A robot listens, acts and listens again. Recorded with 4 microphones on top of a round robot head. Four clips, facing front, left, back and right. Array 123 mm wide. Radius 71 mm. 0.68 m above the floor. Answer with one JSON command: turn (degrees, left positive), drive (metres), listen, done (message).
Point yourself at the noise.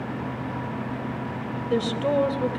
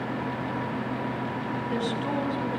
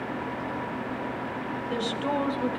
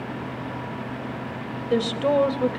{"turn": -75}
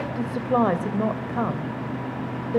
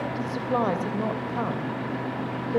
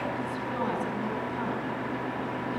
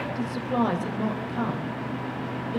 {"turn": 30}
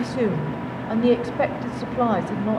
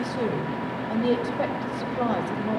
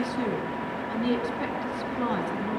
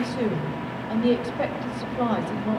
{"done": "Found it: a woman speaking, straight ahead."}